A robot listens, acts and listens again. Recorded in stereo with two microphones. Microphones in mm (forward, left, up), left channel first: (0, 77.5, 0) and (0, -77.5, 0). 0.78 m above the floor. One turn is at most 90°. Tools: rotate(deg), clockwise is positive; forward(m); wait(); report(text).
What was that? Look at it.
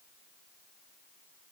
wait()
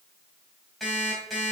rotate(-30)
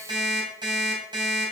rotate(30)
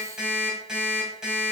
report("Facing the alarm clock, 2 to 4 m away.")